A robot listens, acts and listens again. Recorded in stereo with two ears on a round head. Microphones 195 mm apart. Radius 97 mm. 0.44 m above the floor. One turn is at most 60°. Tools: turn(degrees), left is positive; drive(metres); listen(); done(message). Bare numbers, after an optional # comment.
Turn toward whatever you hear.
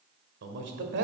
# The man speaking: about 55° right or 125° right.
turn(-55)
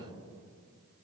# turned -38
listen()
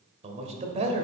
# So it is at 40° right.
turn(-40)
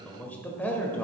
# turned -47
# The man speaking is now 10° left.
turn(10)
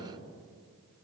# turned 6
done("Facing the man speaking, 1 to 2 m away.")